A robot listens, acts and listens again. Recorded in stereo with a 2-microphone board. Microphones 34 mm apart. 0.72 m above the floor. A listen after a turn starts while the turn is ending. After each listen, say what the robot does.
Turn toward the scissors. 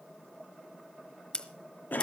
Turn 25° left.
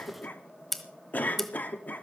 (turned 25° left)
Found it: scissors, straight ahead, 1 to 2 m away.